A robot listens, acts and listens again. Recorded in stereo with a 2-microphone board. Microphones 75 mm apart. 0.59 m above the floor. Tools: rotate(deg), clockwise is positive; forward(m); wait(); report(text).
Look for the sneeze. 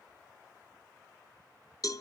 wait()
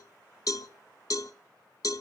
wait()
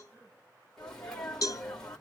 rotate(-30)
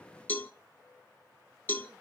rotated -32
wait()
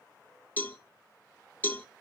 report("I heard a sneeze, but can't make it out now. It was about 25° right or 140° left.")